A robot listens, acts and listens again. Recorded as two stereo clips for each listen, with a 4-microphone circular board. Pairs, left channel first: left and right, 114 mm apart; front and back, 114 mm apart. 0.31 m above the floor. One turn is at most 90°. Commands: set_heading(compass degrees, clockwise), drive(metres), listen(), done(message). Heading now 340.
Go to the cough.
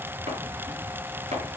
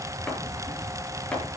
listen()
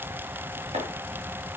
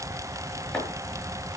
listen()
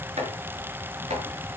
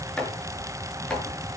done("I can't make out a cough.")